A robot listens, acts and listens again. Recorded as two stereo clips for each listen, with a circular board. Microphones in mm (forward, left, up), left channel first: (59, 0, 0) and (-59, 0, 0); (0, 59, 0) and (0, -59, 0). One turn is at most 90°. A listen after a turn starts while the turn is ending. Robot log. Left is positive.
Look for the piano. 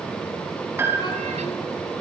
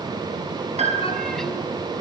note: The piano: 110° right.
cmd yaw -90
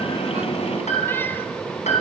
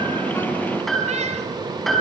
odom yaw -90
end: Facing the piano.